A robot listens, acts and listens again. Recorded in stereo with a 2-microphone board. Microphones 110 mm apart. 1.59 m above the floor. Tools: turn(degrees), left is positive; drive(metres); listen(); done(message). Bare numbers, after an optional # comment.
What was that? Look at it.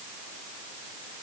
listen()
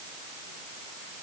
listen()
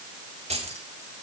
# The keys jangling: about 65° right or 115° right.
turn(-65)
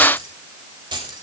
# So it is at 45° right.
turn(-45)
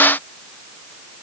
listen()
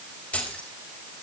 # The keys jangling is now 10° left.
turn(10)
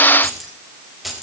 done("Found it: keys jangling, straight ahead, over 4 m away.")